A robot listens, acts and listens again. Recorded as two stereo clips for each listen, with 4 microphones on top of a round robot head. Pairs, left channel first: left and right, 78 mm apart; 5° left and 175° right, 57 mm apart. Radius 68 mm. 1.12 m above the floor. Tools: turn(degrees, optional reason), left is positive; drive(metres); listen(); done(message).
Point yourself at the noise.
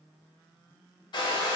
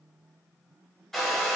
turn(degrees=90, reason="The hair dryer: 90° left.")
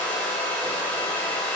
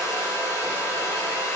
turn(degrees=15, reason="The hair dryer is now 15° left.")
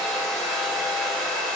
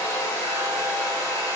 done("Facing the hair dryer.")